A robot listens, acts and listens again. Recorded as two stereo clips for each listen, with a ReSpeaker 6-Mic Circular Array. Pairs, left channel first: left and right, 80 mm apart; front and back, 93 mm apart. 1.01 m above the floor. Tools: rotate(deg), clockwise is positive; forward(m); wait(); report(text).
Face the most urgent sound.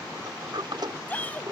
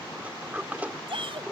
rotate(-160)
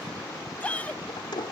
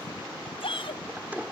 rotate(-15)
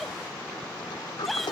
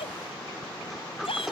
report("Facing the shout.")